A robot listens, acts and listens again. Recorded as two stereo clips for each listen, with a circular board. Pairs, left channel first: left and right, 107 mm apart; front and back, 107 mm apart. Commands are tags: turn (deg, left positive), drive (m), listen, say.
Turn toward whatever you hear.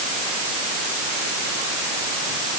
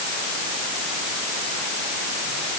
<listen/>
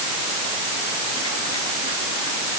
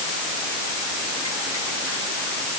<listen/>
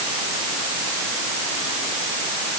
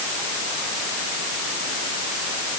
<say>I can't make out anything to turn to.</say>